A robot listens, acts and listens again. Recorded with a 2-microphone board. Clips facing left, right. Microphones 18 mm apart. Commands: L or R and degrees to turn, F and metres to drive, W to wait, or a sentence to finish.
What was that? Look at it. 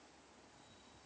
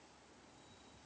W
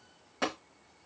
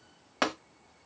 R55
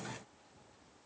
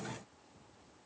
W
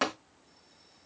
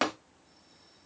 R20
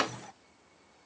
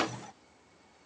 Found it: tapping, straight ahead, 1 to 2 m away.